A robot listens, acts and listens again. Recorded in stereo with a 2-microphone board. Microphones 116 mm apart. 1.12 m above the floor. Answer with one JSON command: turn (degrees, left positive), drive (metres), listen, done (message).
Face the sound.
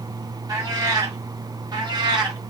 {"turn": -40}
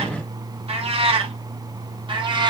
{"turn": -40}
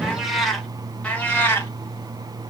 {"turn": 20}
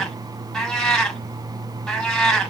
{"done": "Facing the cat meowing."}